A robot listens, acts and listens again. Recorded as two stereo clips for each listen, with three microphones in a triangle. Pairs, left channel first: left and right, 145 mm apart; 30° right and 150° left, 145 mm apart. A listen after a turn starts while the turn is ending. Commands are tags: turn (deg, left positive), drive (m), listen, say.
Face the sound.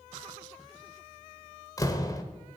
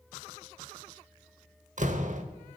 <turn deg="150"/>
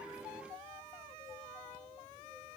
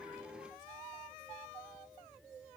<say>I heard a door slam from this way, but can't make it out now.</say>